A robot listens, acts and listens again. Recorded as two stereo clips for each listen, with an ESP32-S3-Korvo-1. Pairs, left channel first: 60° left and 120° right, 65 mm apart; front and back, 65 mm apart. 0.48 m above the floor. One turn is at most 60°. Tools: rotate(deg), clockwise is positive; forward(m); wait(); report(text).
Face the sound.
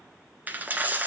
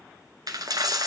rotate(-60)
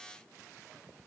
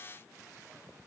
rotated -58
rotate(-60)
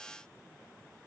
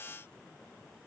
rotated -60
rotate(-60)
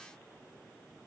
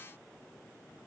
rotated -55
report("I heard a dropped coin from this way, but can't make it out now.")